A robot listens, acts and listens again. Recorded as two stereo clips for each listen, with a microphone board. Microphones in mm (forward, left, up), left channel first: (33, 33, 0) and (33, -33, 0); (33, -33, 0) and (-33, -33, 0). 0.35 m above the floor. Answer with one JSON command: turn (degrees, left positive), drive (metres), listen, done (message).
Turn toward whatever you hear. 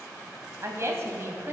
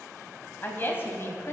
{"turn": -45}
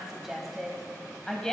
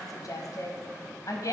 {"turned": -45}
{"turn": 10}
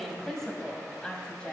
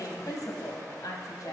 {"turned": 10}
{"turn": 15}
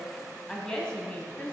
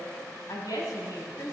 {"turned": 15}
{"turn": 15}
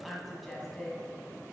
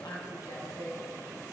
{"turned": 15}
{"done": "Found it: a woman speaking, straight ahead."}